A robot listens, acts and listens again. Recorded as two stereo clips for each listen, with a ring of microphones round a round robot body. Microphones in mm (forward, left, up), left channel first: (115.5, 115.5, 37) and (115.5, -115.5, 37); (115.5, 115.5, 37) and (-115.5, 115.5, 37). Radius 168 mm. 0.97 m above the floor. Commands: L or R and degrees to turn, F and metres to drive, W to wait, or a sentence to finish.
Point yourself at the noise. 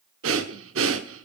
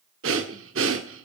R135
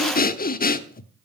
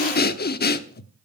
L40
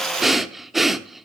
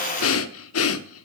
Found it: breathing, straight ahead.